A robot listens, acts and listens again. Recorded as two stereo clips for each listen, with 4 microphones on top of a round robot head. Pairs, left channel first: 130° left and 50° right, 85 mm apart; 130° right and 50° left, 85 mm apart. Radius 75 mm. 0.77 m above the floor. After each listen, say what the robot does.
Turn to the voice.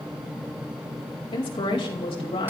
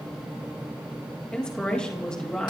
Turn 150° left.
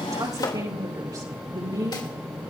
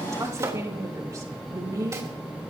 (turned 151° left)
Facing the woman speaking, over 4 m away.